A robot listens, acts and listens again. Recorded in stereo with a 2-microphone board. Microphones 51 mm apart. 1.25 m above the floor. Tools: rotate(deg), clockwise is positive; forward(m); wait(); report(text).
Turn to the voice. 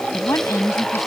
rotate(-90)
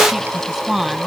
report("Found it: a woman speaking, straight ahead.")